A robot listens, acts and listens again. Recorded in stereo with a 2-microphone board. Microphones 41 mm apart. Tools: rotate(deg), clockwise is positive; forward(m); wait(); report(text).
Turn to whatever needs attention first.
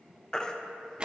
rotate(-15)
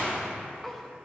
wait()
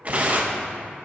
wait()
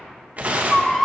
report("Found it: a baby crying, straight ahead.")